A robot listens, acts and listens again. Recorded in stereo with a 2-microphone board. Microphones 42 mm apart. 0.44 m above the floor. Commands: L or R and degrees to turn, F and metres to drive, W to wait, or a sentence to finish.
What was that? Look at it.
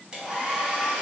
R20
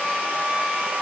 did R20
R140
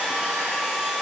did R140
Found it: a hair dryer, straight ahead.